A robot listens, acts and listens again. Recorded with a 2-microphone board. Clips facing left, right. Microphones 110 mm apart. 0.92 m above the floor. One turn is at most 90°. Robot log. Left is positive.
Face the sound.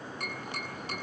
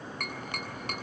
note: The tapping: about 60° right or 120° right.
cmd yaw -60
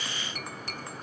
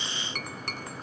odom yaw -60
note: So it is at 60° right.
cmd yaw -60
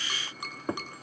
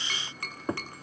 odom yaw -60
note: The tapping is now 15° left.
cmd yaw +15
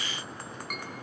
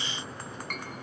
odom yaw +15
note: The tapping is now 10° left.
cmd yaw +10
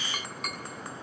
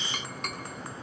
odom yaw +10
end: Found it: tapping, straight ahead.